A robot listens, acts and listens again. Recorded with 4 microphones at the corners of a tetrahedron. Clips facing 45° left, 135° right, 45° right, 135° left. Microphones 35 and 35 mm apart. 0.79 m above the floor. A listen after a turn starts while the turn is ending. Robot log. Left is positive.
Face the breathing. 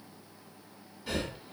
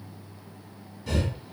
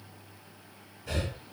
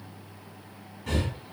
note: The breathing: 120° left.
cmd yaw +120
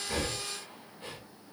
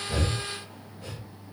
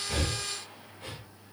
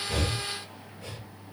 end: Facing the breathing.